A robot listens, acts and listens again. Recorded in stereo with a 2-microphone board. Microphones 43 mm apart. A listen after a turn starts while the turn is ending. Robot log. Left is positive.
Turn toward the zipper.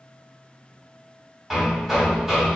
cmd idle
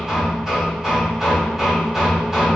cmd idle
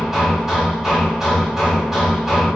end: I can't make out a zipper to turn to.